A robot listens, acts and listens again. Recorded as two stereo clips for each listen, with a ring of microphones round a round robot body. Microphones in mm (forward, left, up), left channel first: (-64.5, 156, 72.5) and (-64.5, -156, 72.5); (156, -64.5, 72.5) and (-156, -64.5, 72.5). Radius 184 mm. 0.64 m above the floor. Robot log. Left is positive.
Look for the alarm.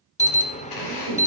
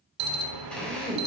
note: The alarm: 160° left.
cmd yaw +160
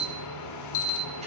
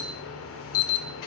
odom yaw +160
note: The alarm is now 50° left.
cmd yaw +50
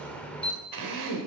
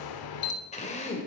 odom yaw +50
end: Facing the alarm.